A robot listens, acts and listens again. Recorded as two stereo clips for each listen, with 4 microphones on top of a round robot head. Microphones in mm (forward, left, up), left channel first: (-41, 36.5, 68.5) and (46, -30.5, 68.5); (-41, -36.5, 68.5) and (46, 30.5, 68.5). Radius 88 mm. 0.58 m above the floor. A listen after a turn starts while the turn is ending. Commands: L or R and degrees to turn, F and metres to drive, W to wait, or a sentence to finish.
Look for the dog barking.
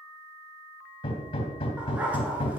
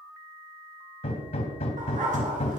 L40
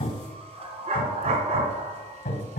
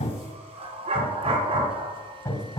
R10
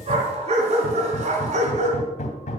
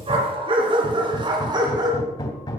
R20
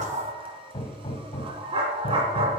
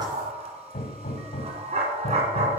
Found it: a dog barking, straight ahead, 2 to 4 m away.